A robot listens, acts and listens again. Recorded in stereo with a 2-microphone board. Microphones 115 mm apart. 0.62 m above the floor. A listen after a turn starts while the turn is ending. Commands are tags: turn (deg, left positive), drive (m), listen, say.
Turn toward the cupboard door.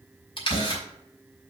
<turn deg="55"/>
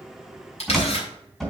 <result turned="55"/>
<say>Facing the cupboard door, 2 to 4 m away.</say>